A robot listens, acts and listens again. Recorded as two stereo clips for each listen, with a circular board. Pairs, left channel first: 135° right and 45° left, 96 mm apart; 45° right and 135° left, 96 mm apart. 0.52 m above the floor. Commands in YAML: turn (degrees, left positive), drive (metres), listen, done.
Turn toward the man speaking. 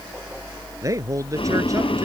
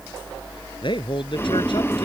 turn: -10
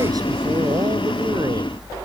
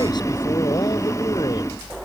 listen: true
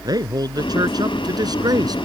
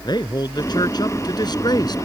done: "Facing the man speaking."